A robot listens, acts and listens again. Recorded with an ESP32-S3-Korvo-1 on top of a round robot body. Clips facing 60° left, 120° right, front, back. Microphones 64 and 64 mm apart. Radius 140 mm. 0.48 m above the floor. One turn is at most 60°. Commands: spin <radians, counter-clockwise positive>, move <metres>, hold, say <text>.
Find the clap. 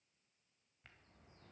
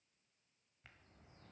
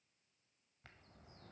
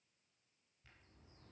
hold
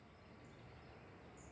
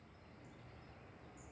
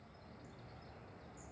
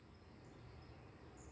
hold
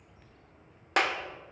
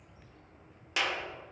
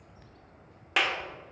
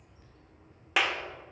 spin 1.05
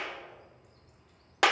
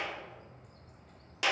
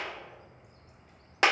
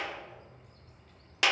spin 0.87
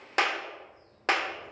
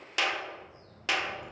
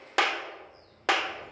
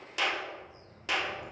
spin 0.26
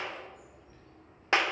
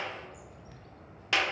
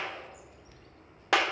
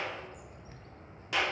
say Found it: a clap, straight ahead.